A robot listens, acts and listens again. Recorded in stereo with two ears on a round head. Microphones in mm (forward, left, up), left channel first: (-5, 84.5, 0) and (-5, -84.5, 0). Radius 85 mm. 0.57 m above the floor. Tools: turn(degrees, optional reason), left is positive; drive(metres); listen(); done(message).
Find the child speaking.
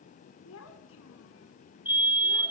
turn(degrees=90)
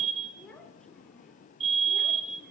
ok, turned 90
done("Found it: a child speaking, straight ahead, over 4 m away.")